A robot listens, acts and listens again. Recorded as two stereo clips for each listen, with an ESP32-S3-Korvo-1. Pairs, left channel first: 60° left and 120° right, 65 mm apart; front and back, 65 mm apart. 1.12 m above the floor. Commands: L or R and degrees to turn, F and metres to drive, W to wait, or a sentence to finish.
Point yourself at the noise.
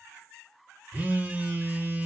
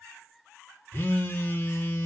R55
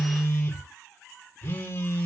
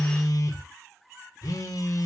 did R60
Found it: a phone buzzing, straight ahead, under 1 m away.